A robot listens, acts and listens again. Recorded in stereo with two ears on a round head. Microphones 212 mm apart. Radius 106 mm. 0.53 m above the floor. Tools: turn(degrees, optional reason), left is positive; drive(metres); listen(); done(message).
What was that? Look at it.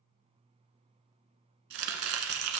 turn(degrees=-65, reason="The chopping: about 65° right or 115° right.")
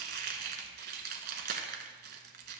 turn(degrees=-45, reason="So it is at 45° right.")
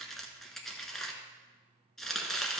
done("Facing the chopping.")